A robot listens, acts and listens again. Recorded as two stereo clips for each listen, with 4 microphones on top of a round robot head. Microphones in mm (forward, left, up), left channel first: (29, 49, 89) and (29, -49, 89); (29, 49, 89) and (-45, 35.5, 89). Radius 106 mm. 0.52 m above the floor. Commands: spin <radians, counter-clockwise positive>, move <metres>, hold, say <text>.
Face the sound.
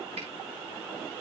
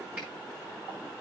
hold
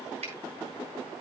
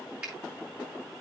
spin -1.57
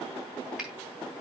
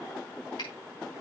hold
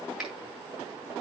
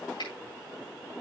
say Facing the finger snap.